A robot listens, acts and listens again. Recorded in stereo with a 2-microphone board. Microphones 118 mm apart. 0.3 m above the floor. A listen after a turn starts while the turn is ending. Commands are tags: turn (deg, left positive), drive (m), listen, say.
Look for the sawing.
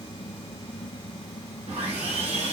<turn deg="-70"/>
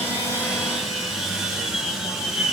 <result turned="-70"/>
<say>Facing the sawing, 1 to 2 m away.</say>